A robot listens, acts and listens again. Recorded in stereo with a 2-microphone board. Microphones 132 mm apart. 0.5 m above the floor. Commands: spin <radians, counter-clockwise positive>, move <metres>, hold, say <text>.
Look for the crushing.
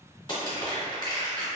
spin 0.70
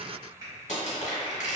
spin 1.75
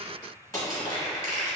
spin 0.44
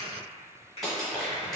say Found it: crushing, straight ahead.